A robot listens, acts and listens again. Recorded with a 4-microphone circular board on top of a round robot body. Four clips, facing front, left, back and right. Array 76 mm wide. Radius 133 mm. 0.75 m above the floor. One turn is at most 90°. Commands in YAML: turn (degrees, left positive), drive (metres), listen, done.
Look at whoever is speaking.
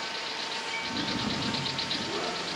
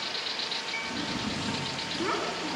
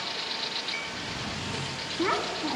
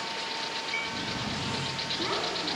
turn: -90
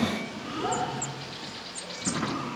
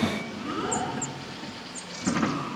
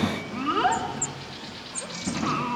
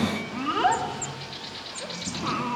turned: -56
turn: -90
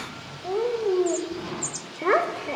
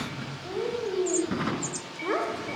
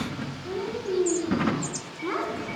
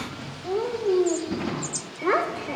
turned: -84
turn: -15
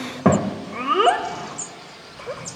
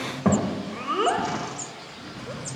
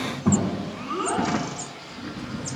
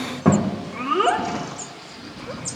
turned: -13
done: "Found it: a child speaking, straight ahead."